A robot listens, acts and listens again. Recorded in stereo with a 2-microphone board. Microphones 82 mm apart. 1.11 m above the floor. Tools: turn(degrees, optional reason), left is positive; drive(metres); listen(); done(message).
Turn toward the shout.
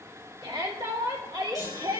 turn(degrees=-90)
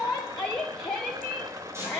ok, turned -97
turn(degrees=10, reason="So it is at 10° left.")
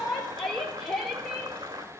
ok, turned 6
done("Found it: a shout, straight ahead, 2 to 4 m away.")